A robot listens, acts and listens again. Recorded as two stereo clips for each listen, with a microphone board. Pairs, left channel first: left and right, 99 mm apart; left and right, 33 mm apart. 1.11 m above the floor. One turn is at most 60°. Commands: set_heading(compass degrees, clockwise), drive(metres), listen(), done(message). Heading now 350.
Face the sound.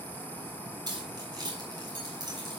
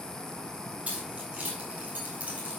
set_heading(40)
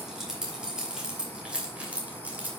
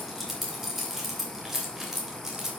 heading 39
set_heading(54)
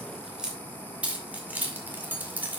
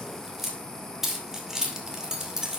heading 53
set_heading(73)
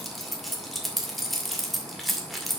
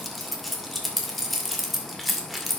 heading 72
done("Facing the keys jangling.")